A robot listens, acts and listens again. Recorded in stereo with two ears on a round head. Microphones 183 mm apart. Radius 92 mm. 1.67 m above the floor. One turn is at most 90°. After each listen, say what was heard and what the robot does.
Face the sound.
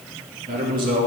The man speaking: about 45° right or 135° right. Turn 45° right.
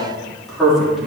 Facing the man speaking.